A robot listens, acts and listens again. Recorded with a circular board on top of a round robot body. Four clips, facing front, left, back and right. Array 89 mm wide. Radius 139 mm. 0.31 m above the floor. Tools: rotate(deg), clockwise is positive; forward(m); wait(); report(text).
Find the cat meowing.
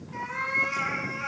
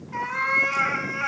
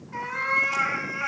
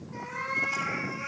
rotate(-115)
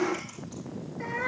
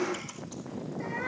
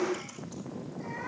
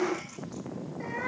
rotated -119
report("Facing the cat meowing.")